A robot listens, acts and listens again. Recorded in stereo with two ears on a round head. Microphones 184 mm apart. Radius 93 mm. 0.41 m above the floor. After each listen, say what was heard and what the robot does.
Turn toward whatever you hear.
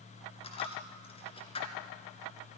The dropped coin: about 30° left or 150° left. Turn 30° left.
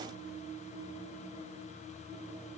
Keep listening.
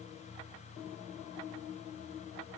I heard a dropped coin, but can't make it out now. It was about straight ahead or 120° left.